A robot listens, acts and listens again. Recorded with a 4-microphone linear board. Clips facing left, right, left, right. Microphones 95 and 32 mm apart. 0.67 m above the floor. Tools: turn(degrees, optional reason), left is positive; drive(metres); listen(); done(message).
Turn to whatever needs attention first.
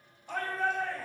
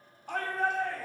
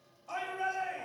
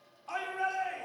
turn(degrees=-65, reason="The shout: about 65° right or 115° right.")
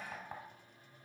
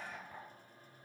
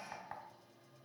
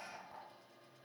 listen()
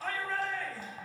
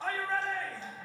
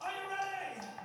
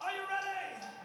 turn(degrees=-25, reason="So it is at 25° right.")
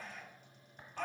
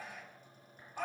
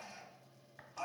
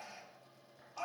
turn(degrees=-10, reason="The shout is now 10° right.")
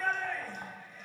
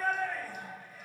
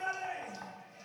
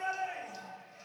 done("Facing the shout.")